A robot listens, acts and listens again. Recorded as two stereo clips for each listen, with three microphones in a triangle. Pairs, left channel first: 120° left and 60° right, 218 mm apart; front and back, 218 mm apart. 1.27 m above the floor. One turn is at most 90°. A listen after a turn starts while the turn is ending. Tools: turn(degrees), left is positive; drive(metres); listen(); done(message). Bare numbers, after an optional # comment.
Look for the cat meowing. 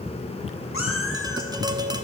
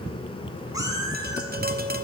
# The cat meowing: 105° left.
turn(90)
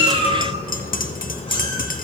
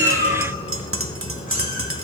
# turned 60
# Nothing new. It was at 45° left.
turn(45)
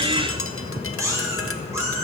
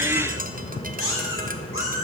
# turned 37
# The cat meowing is now 20° left.
turn(20)
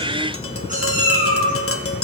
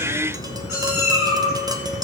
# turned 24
done("Found it: a cat meowing, straight ahead.")